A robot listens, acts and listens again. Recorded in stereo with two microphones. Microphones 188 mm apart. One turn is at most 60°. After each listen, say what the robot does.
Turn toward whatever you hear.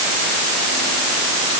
Keep listening.
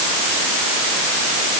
Keep listening.
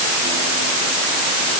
I can't make out anything.